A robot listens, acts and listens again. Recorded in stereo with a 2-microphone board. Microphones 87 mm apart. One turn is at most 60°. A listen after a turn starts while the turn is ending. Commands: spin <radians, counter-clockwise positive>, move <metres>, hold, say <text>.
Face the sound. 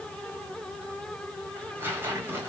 spin -0.44
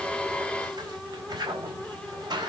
spin -1.05
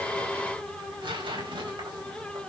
spin -1.05
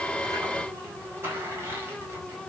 spin -0.52
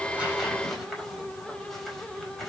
say Found it: tearing paper, straight ahead, over 4 m away.